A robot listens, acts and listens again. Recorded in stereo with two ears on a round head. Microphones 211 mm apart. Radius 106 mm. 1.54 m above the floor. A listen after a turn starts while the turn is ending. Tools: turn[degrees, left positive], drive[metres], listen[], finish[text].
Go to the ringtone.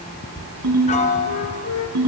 Action: turn[-90]
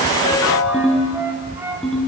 Action: drive[1.0]
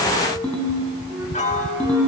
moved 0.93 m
Action: drive[1.0]
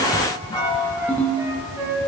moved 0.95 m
Thought: The ringtone is now 10° left.
Action: turn[10]
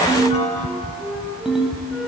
Action: drive[1.0]
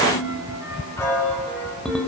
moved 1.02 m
Action: drive[1.0]
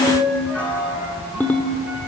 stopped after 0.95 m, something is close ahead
Thought: The ringtone is now 10° left.
Action: turn[10]
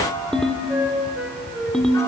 Action: finish[I am next to the ringtone.]